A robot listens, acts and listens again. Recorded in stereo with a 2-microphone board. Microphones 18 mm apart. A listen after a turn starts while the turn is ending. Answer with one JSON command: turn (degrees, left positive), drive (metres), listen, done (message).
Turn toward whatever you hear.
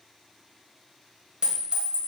{"turn": -65}
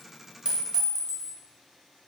{"turn": -45}
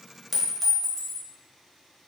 {"done": "Found it: a clink, straight ahead."}